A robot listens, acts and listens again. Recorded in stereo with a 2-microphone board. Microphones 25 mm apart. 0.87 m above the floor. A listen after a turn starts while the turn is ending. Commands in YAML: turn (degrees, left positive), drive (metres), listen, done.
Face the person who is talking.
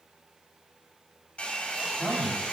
turn: 20
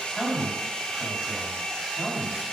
turn: 140
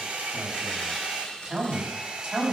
turn: -30
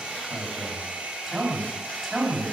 done: "Found it: a man speaking, straight ahead."